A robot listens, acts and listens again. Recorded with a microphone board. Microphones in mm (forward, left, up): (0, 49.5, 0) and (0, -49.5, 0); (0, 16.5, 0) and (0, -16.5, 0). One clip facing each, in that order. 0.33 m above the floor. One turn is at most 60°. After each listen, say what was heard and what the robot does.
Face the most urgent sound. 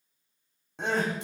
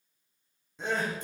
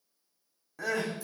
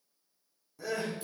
The crying: about 70° left or 110° left. Turn 60° left.
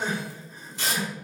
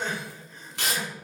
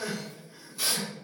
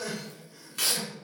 So it is at 15° left. Turn 15° left.
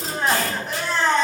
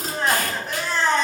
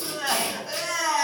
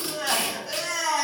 Found it: crying, straight ahead.